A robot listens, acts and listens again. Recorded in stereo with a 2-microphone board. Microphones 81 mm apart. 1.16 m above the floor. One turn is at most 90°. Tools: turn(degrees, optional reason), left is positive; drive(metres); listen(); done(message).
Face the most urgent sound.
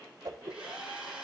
listen()
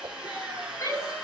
turn(degrees=40, reason="The shout: about 40° left or 140° left.")
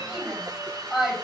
done("Found it: a shout, straight ahead, over 4 m away.")